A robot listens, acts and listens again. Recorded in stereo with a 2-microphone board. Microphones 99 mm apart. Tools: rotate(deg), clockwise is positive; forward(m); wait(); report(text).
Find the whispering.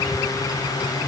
wait()
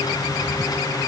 wait()
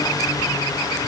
report("I can't make out whispering to turn to.")